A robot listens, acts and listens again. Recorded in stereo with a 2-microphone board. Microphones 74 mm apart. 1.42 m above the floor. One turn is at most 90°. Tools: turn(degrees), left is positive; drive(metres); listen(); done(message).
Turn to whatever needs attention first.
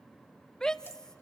turn(degrees=30)
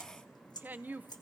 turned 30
turn(degrees=-25)
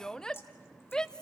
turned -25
turn(degrees=10)
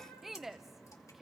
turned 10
done("Found it: a shout, straight ahead.")